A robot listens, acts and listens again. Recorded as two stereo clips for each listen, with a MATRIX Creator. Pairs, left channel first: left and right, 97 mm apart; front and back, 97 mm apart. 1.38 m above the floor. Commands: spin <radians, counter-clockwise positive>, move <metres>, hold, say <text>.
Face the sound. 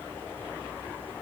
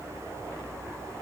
hold
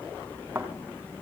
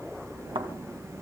spin -2.79
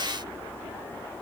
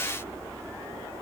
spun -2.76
say Facing where the thud came from. I can't hear it now.